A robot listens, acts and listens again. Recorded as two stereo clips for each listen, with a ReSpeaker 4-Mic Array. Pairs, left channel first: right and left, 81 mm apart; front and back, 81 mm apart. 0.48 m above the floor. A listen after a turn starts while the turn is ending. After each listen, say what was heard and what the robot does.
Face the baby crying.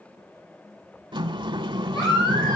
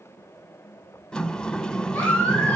The baby crying: 70° right. Turn 70° right.
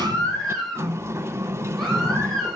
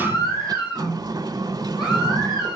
Facing the baby crying.